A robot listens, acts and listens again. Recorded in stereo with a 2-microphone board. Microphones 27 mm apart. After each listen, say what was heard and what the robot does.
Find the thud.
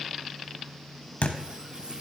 The thud: about 60° left or 120° left. Turn 60° left.
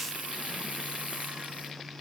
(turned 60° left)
Keep listening.
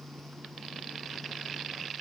I heard a thud, but can't make it out now. It was about straight ahead or 60° left.